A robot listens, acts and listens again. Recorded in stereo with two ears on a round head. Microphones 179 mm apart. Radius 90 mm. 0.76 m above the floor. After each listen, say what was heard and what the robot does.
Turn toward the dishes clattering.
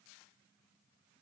Keep listening.
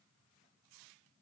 Keep listening.
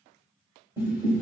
The dishes clattering: about 15° right or 165° right. Turn 15° right.
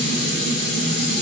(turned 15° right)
Facing the dishes clattering.